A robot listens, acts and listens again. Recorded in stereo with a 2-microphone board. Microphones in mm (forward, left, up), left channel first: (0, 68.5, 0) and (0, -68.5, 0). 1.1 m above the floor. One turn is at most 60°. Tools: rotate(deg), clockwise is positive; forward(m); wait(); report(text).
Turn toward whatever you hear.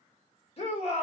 rotate(-45)
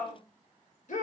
rotate(-60)
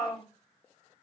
rotate(-25)
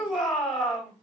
report("Facing the shout.")